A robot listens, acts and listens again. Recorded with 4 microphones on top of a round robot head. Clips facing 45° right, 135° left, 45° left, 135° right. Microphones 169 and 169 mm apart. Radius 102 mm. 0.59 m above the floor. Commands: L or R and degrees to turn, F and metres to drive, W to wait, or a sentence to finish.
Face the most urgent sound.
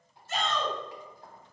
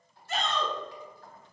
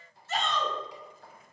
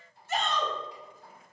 L150
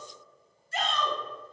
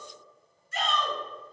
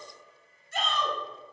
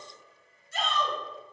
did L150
L15
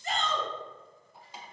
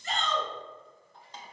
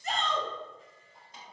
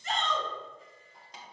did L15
Found it: a shout, straight ahead, 1 to 2 m away.